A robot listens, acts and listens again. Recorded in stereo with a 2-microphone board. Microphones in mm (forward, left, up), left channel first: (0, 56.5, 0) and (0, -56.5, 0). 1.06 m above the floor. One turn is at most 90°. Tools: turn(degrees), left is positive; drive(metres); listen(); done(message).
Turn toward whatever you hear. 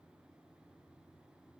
listen()
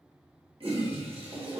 turn(degrees=-55)
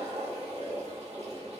turn(degrees=-70)
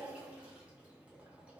turn(degrees=-10)
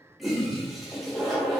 done("Facing the toilet flushing.")